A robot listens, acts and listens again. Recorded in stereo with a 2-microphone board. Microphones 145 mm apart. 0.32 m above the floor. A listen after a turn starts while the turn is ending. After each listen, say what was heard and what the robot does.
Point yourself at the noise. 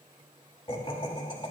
The laughter: about 35° left or 145° left. Turn 35° left.
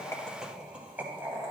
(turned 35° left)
So it is at 20° right. Turn 20° right.
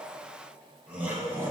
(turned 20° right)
The laughter is now 15° right. Turn 15° right.
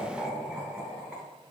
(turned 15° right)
The laughter is now 10° right. Turn 10° right.
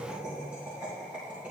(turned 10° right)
The laughter is now 10° right. Turn 10° right.
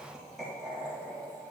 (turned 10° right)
Facing the laughter.